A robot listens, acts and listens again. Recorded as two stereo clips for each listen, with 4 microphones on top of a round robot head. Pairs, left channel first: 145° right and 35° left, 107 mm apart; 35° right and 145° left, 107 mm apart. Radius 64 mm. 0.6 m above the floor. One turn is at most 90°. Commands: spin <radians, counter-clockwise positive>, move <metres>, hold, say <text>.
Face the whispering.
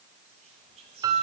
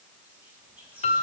spin 1.22
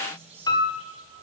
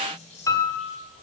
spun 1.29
say Facing the whispering.